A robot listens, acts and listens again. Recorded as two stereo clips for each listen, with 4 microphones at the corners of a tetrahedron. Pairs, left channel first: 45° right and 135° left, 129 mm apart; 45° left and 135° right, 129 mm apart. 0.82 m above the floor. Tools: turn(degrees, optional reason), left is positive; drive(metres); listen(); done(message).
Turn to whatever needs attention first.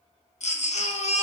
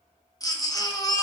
turn(degrees=-15, reason="The baby crying: 15° right.")
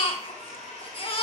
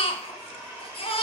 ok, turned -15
done("Facing the baby crying, under 1 m away.")